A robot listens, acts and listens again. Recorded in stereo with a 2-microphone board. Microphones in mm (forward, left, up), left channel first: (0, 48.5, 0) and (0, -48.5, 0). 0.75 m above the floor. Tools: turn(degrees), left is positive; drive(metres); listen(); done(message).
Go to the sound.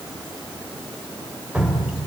turn(degrees=-30)
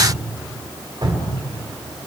turn(degrees=-130)
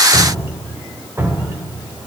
turn(degrees=-25)
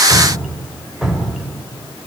drive(metres=1.0)
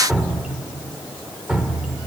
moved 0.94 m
turn(degrees=-10)
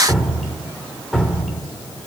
drive(metres=1.0)
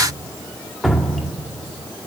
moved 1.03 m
drive(metres=1.0)
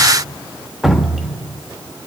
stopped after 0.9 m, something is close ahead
done("Arrived at the dripping, straight ahead.")